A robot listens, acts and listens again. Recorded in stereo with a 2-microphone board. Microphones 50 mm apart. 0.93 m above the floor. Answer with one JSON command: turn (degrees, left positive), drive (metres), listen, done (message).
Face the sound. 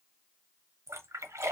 {"turn": -75}
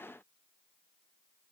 {"listen": true}
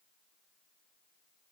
{"done": "I heard a splash, but can't make it out now. It was about straight ahead or 30° right."}